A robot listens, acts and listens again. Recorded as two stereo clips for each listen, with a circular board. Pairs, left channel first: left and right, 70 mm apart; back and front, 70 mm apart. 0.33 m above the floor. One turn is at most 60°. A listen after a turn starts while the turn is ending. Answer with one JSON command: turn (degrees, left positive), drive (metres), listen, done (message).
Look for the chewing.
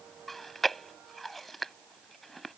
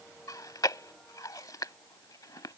{"turn": 60}
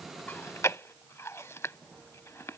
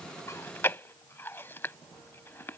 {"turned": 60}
{"turn": 60}
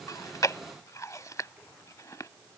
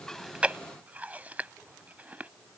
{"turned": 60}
{"turn": 60}
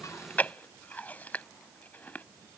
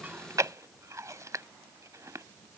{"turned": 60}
{"turn": 30}
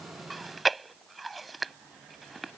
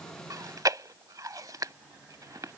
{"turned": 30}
{"done": "Facing the chewing."}